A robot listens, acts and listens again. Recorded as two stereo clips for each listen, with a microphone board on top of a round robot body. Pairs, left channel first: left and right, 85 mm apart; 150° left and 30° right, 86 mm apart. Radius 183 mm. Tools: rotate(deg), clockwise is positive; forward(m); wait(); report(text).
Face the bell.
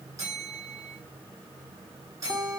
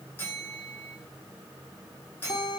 rotate(140)
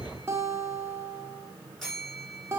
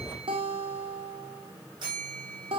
report("Found it: a bell, straight ahead.")